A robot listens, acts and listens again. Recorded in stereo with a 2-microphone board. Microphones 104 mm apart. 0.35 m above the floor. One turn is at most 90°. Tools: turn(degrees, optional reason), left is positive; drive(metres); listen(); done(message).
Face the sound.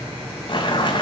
turn(degrees=50, reason="The boiling: about 50° left or 130° left.")
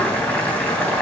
turn(degrees=10, reason="So it is at 10° left.")
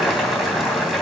done("Facing the boiling, 2 to 4 m away.")